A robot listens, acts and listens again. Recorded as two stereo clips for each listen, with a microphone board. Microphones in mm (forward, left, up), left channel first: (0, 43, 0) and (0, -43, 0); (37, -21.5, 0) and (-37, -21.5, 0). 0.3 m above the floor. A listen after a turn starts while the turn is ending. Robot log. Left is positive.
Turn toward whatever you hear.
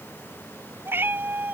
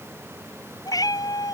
note: The cat meowing: 25° right.
cmd yaw -25
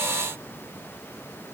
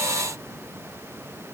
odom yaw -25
cmd idle
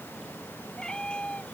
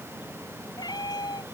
note: The cat meowing is now 15° left.
cmd yaw +15
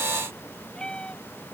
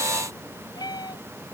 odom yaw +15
note: The cat meowing is now 15° left.
cmd yaw +15
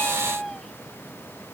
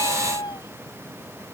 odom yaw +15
end: Facing the cat meowing.